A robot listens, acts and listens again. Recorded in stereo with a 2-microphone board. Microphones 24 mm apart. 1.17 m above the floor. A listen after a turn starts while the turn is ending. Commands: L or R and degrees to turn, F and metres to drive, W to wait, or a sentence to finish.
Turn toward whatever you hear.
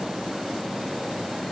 W
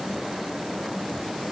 W
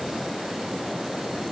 I can't make out anything.